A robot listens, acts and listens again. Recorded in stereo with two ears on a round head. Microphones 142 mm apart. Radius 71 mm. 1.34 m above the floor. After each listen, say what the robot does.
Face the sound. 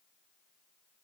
Keep listening.
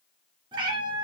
Turn 30° right.
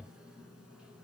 Keep listening.
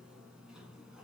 Keep listening.
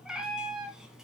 Facing the cat meowing.